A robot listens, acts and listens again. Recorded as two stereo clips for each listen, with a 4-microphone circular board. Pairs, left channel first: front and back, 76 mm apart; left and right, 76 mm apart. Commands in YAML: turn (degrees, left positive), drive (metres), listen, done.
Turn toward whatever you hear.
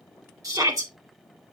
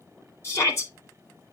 turn: 140
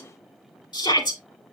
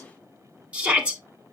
turn: -20
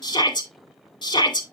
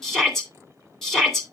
done: "Facing the shout, 2 to 4 m away."